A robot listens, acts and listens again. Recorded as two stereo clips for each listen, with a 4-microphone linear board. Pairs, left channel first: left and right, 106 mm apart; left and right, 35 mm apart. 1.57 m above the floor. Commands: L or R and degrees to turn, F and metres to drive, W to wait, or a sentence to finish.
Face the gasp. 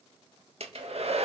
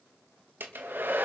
W
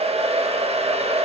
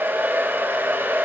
W
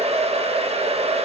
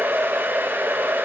I can't make out a gasp to turn to.